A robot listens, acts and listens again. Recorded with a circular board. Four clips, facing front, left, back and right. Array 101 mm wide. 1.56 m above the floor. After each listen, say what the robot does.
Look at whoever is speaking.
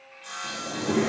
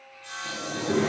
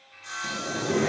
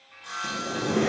Turn 10° right.
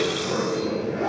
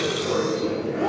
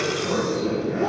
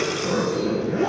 Keep listening.
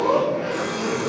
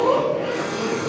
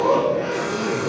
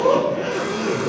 Keep listening.
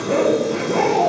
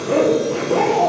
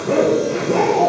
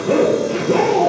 I heard a child speaking from this way, but can't make it out now.